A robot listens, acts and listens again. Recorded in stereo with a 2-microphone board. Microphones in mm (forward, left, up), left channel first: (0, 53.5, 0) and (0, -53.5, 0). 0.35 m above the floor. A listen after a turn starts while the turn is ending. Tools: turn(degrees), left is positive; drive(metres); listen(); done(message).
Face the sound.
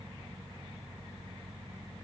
listen()
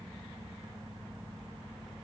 listen()
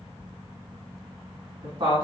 turn(degrees=-45)
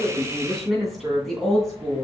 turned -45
done("Found it: a woman speaking, straight ahead, 2 to 4 m away.")